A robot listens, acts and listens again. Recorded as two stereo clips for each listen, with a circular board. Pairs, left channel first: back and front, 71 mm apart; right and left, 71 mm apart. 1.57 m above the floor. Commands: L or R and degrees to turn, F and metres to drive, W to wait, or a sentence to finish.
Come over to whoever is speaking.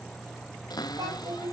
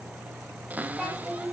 F1.0
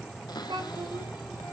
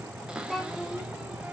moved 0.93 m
F1.0
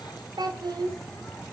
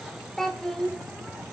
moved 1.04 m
F1.0
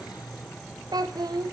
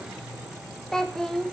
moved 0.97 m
F1.0
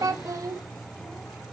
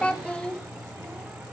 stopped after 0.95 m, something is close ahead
R20
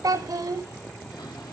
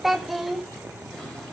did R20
Arrived at the child speaking, straight ahead.